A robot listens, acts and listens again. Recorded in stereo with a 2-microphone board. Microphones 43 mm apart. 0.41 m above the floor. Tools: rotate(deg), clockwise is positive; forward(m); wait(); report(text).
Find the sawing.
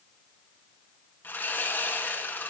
rotate(-55)
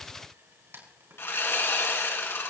rotate(-70)
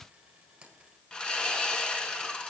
rotate(-20)
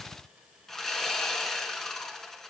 rotate(-10)
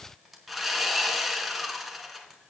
report("Facing the sawing, 2 to 4 m away.")